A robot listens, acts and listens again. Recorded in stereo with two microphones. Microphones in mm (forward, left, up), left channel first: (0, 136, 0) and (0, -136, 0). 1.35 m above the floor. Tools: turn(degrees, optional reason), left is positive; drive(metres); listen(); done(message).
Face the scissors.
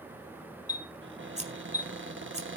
turn(degrees=-25, reason="The scissors: about 25° right or 155° right.")
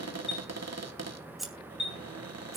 done("Found it: scissors, straight ahead, 2 to 4 m away.")